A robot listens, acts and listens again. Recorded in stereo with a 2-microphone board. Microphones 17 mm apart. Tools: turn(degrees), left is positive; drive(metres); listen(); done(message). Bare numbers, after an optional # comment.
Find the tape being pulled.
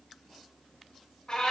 listen()
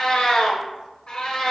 listen()
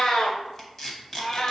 # The tape being pulled: about 25° left or 155° left.
turn(25)
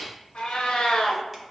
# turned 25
listen()
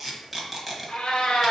done("Facing the tape being pulled.")